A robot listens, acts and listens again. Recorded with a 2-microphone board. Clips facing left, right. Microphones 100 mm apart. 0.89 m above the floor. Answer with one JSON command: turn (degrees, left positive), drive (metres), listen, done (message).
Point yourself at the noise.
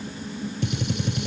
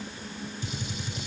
{"turn": 65}
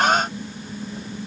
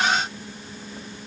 {"listen": true}
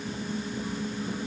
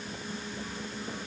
{"done": "I heard a gunshot, but can't make it out now. It was about straight ahead or 50° left."}